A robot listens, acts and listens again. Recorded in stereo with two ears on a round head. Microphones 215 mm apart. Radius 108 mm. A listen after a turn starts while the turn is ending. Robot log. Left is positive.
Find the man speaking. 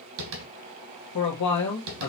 cmd yaw +90
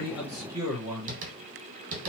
note: So it is at 15° right.
cmd yaw -15
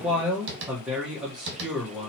end: Found it: a man speaking, straight ahead.